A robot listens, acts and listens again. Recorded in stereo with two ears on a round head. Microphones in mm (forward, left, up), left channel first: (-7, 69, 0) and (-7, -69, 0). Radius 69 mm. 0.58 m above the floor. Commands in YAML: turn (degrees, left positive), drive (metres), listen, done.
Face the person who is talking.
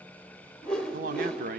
turn: -55
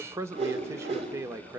turn: -20
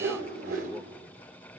listen: true
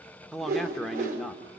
done: "Facing the man speaking, 1 to 2 m away."